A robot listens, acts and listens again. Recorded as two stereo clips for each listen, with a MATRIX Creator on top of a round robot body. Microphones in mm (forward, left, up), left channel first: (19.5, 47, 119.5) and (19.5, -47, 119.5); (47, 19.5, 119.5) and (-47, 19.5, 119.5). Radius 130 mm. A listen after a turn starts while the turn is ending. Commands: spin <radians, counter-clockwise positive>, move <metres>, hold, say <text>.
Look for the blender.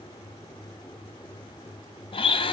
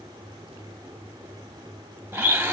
spin 2.01
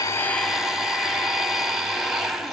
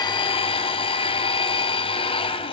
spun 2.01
say Found it: a blender, straight ahead, under 1 m away.